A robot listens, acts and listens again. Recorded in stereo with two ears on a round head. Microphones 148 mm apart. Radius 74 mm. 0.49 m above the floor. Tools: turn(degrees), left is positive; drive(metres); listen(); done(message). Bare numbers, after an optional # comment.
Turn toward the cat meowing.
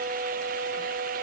listen()
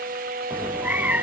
turn(-30)
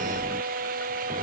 # So it is at 145° right.
turn(-145)
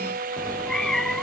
done("Found it: a cat meowing, straight ahead.")